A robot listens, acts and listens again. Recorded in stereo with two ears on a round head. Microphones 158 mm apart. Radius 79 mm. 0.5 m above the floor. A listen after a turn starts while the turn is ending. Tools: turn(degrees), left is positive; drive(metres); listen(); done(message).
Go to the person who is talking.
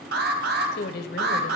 turn(degrees=60)
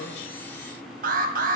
listen()
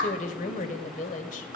turn(degrees=50)
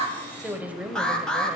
turn(degrees=-10)
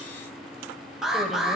listen()
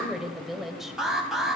drive(metres=1.0)
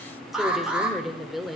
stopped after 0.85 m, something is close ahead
done("Arrived at the woman speaking, straight ahead.")